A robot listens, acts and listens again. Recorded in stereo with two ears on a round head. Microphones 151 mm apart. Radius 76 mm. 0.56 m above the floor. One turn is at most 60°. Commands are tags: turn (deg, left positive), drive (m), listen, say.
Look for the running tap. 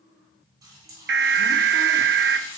<turn deg="-25"/>
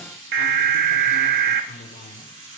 <turn deg="-60"/>
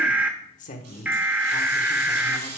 <turn deg="-60"/>
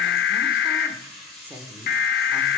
<say>Facing the running tap.</say>